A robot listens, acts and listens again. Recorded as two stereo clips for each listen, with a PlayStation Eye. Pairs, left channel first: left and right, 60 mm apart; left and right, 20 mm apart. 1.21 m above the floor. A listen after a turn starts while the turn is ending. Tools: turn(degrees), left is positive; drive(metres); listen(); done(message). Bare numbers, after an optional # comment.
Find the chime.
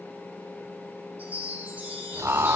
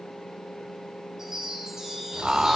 # The chime: about 25° right or 155° right.
turn(-25)
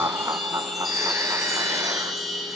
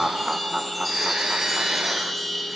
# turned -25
done("Found it: a chime, straight ahead, over 4 m away.")